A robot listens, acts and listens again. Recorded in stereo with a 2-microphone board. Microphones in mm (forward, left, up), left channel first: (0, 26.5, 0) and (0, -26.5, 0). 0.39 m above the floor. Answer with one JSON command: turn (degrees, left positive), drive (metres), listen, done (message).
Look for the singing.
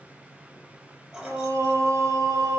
{"turn": -90}
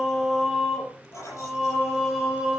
{"done": "Facing the singing."}